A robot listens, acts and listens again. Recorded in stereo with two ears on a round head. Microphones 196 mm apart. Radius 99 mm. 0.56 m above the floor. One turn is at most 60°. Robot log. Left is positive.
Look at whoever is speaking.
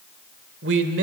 note: The man speaking: about 55° right or 125° right.
cmd yaw -55
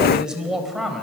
end: Facing the man speaking, 2 to 4 m away.